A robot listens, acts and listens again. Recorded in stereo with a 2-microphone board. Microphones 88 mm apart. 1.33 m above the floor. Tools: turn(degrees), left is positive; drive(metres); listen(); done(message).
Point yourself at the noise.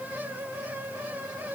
listen()
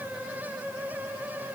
listen()
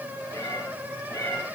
turn(degrees=30)
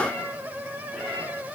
done("Found it: a cat meowing, straight ahead.")